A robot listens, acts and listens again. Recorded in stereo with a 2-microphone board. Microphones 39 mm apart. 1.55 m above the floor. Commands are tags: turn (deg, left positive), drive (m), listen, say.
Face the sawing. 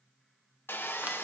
<turn deg="65"/>
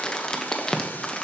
<listen/>
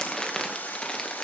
<turn deg="45"/>
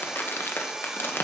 <turn deg="-15"/>
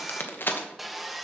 <say>Facing the sawing.</say>